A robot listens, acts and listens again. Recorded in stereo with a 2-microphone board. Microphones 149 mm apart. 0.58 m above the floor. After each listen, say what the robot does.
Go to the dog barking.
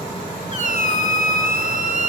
Keep listening.
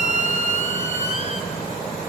Keep listening.
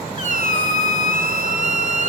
I can't make out a dog barking to turn to.